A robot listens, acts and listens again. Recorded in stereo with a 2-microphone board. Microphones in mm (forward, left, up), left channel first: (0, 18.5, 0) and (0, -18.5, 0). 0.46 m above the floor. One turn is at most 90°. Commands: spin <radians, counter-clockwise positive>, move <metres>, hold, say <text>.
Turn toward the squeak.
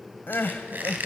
spin -0.96
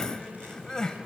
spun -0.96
hold
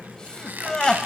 spin -1.13
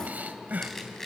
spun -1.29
spin 0.17
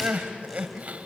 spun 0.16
hold
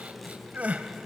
hold
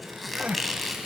say Facing the squeak, 2 to 4 m away.